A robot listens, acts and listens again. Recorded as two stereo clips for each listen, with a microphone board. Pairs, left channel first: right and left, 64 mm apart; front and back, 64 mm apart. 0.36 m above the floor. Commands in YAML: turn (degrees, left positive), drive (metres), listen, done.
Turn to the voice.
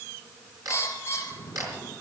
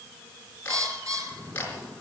listen: true
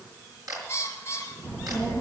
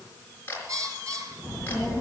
turn: 135
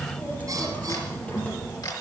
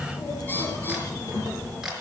turn: -25
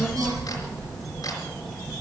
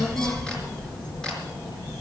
done: "Facing the child speaking."